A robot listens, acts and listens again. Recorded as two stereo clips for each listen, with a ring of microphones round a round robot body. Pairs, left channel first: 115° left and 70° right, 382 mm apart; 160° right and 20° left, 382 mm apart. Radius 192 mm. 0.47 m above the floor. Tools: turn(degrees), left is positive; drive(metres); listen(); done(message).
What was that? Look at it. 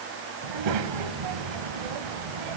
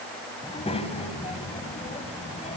turn(degrees=-85)
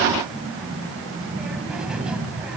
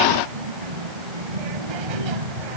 turn(degrees=20)
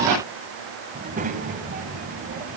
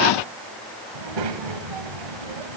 done("Facing the child speaking, 2 to 4 m away.")